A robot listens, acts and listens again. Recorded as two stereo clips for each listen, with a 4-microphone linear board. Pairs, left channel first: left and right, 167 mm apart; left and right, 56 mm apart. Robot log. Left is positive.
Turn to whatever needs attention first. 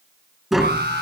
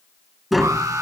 note: The alarm: about 75° right or 105° right.
cmd yaw -75
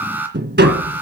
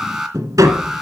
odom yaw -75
note: So it is at 10° right.
cmd yaw -10
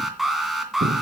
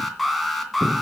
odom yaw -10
end: Found it: an alarm, straight ahead, 2 to 4 m away.